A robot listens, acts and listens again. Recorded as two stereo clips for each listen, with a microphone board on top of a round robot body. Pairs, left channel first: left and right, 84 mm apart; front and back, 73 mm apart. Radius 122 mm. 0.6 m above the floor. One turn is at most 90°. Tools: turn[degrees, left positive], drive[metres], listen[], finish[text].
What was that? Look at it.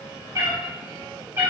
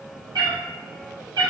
Thought: The cat meowing: 155° right.
Action: turn[-90]
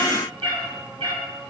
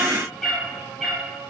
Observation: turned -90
Thought: The cat meowing is now 85° right.
Action: turn[-85]
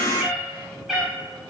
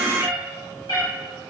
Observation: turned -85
Action: finish[Facing the cat meowing.]